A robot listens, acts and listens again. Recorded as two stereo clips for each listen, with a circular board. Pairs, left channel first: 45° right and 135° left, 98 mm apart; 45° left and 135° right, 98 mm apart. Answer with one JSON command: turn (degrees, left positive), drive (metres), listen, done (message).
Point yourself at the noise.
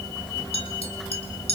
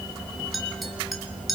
{"turn": -45}
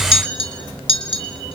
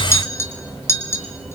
{"turn": -20}
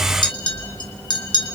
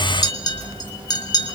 {"done": "Found it: a clink, straight ahead, 2 to 4 m away."}